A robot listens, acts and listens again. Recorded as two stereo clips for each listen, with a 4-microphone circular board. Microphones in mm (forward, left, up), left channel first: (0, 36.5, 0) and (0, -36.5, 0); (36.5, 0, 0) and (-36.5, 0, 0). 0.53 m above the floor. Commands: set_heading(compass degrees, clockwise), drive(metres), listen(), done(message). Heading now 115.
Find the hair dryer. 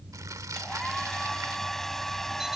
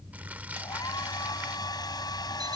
done("Facing the hair dryer.")